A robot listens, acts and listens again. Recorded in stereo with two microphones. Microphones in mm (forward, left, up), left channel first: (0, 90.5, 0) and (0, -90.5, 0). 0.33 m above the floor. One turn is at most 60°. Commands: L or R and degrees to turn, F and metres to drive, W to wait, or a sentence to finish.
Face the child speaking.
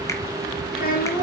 L55
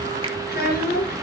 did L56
L55
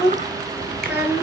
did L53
R10
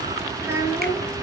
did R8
R15
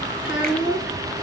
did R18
Found it: a child speaking, straight ahead.